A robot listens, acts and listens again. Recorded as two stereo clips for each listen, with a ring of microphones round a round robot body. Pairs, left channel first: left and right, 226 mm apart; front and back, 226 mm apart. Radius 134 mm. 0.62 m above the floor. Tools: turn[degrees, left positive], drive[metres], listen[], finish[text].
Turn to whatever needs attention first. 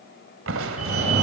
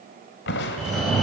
Thought: The fire alarm: 90° right.
Action: turn[-90]
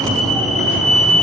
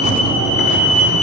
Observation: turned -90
Action: finish[Facing the fire alarm, over 4 m away.]